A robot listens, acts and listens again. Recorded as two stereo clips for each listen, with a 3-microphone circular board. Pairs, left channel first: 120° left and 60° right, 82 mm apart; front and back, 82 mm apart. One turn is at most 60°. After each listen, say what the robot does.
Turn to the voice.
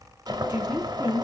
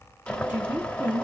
Turn 60° right.
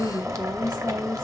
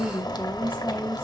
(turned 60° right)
Turn 60° right.
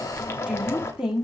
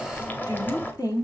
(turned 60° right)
Turn 20° left.
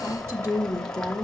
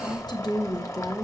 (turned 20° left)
Turn 10° right.
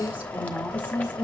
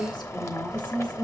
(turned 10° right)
Facing the woman speaking, 1 to 2 m away.